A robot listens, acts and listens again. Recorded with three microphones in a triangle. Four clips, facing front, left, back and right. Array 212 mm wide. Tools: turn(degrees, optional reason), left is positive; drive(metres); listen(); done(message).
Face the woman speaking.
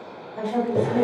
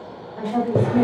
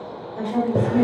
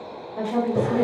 turn(degrees=-60, reason="The woman speaking: 60° right.")
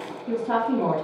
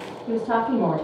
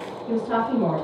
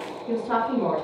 turn(degrees=45, reason="The woman speaking is now 45° left.")
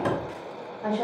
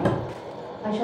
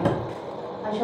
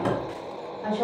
turn(degrees=25, reason="The woman speaking is now 25° left.")
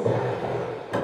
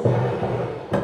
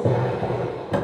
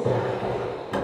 turn(degrees=15, reason="The woman speaking is now 15° left.")
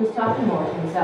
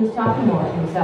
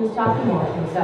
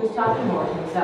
turn(degrees=25, reason="The woman speaking is now 25° left.")
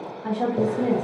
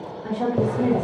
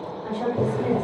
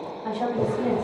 turn(degrees=-20, reason="The woman speaking is now 20° right.")
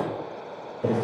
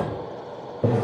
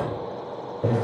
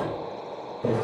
listen()
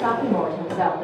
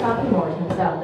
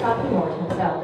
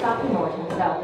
done("Found it: a woman speaking, straight ahead.")